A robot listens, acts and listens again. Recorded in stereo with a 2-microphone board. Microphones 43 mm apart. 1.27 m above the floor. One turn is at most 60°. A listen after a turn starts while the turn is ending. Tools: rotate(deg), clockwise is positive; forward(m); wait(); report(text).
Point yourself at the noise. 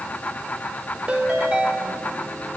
rotate(30)
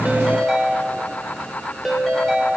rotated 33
report("Facing the ringtone.")